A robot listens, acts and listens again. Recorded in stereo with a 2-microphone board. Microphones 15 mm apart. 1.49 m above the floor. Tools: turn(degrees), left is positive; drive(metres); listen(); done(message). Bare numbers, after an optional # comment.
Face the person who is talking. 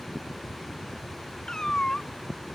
listen()
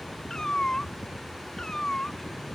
listen()
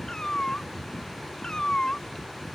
done("I can't make out anyone speaking, only a cat meowing.")